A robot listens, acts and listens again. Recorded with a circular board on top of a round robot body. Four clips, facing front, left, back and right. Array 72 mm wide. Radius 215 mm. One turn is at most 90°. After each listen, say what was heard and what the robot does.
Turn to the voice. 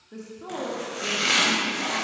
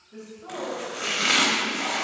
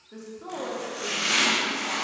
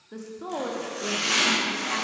The woman speaking: 85° right. Turn 85° right.
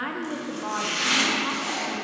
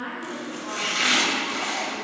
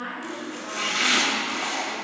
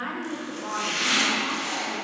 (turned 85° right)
The woman speaking is now 10° right. Turn 10° right.
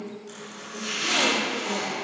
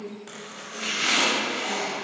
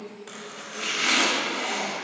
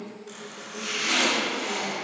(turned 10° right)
Facing the woman speaking.